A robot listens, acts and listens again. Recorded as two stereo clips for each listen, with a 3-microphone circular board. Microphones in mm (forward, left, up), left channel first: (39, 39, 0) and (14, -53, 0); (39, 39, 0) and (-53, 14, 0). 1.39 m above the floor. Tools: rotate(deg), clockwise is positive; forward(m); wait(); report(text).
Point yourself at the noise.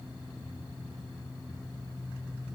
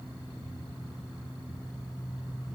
wait()
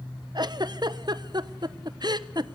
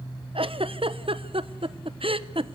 rotate(145)
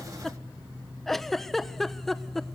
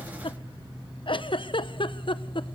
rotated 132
rotate(15)
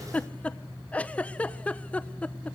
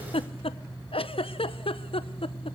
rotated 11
report("Facing the giggle, 1 to 2 m away.")